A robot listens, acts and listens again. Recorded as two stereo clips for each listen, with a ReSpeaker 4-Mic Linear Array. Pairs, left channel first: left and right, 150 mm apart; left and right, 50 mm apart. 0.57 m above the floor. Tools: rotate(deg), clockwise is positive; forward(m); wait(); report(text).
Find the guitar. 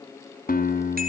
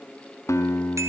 rotate(-70)
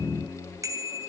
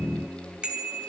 report("Facing the guitar, 2 to 4 m away.")